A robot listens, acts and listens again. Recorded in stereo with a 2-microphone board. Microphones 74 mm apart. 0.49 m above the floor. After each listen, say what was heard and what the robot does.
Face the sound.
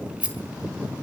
The rattle: about 20° right or 160° right. Turn 20° right.
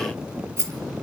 So it is at 140° right. Turn 140° right.
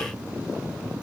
Keep listening.
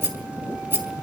The rattle is now 30° right. Turn 30° right.
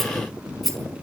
Found it: a rattle, straight ahead.